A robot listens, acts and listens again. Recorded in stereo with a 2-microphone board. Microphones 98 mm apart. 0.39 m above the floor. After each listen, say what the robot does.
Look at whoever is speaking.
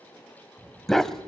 Turn 25° right.
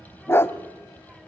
Found it: a child speaking, straight ahead, under 1 m away.